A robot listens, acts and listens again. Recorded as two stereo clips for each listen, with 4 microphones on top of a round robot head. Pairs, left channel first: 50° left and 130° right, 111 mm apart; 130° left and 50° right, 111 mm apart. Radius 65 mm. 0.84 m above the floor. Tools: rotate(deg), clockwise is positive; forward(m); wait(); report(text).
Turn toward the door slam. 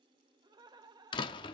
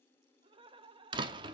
report("Found it: a door slam, straight ahead, under 1 m away.")